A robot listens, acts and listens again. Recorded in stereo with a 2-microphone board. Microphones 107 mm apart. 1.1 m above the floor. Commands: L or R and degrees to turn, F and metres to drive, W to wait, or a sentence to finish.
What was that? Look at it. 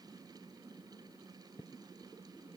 W
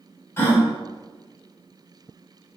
L25
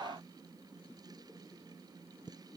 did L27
W
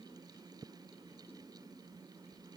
I heard a gasp, but can't make it out now. It was about 5° right or 130° left.